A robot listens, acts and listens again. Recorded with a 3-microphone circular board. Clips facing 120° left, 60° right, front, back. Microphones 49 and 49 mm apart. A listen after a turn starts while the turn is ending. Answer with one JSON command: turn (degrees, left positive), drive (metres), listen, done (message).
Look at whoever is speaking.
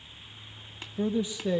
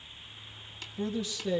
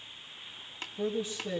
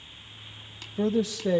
{"turn": -165}
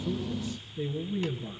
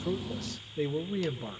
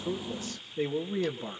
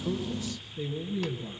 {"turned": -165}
{"turn": -40}
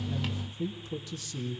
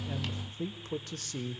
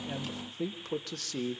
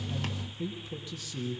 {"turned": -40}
{"turn": -20}
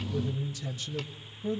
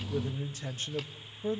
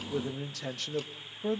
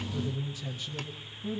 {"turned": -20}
{"done": "Found it: a man speaking, straight ahead, 1 to 2 m away."}